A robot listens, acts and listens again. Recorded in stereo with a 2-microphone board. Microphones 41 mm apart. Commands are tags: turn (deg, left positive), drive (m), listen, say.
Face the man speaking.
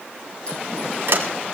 <listen/>
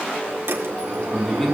<turn deg="30"/>
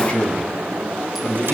<turn deg="145"/>
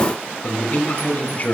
<turn deg="40"/>
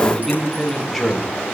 <say>Found it: a man speaking, straight ahead.</say>